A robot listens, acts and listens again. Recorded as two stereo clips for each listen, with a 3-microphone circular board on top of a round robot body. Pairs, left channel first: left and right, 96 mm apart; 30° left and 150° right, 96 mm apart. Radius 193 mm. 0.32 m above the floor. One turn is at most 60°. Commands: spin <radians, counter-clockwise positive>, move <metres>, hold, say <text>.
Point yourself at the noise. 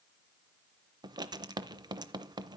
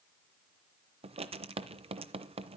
spin -1.05
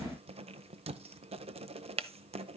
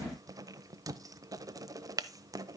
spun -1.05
spin -1.05
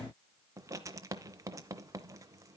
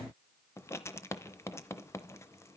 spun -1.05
spin -0.52
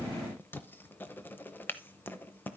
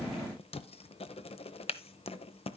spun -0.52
spin 0.35
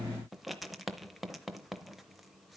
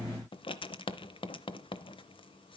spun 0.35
say Facing the writing, under 1 m away.